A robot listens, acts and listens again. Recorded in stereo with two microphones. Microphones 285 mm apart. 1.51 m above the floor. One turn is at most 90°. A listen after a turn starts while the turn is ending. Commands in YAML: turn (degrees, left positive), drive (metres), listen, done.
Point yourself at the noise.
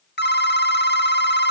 turn: 35
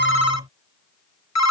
turn: 90
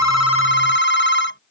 turn: 40
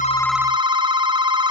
turn: -15
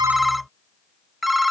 done: "Found it: a phone ringing, straight ahead."